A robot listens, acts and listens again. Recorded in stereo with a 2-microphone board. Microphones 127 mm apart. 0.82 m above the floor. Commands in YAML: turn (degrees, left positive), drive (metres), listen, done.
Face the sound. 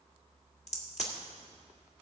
turn: 65
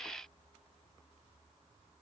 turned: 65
listen: true
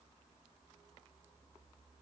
done: "I heard a crack, but can't make it out now. It was about straight ahead or 50° left."